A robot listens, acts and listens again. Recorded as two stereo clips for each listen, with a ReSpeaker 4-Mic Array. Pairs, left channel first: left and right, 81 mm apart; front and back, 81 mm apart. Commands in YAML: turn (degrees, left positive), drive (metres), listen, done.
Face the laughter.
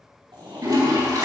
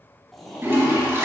turn: -85
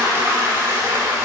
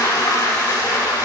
listen: true
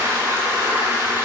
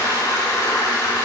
listen: true
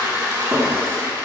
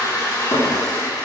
done: "Facing where the laughter came from. I can't hear it now."